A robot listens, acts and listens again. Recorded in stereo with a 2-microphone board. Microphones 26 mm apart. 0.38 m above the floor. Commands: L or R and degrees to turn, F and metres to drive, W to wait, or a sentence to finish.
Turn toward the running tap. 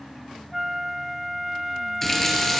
L30
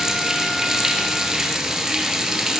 R20
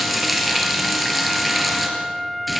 Found it: a running tap, straight ahead, over 4 m away.